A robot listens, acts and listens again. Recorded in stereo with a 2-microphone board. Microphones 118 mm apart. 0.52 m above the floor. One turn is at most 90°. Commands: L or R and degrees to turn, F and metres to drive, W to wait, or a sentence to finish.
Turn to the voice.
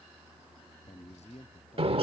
L90
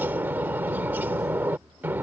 W
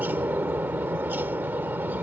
W
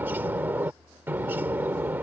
I heard a man speaking from this way, but can't make it out now.